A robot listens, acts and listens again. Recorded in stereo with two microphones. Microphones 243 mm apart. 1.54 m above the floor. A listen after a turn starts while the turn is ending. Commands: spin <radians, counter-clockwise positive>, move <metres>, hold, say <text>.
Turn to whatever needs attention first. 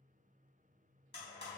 hold
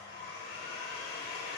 hold
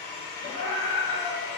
spin 1.22
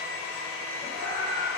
say Facing the scream.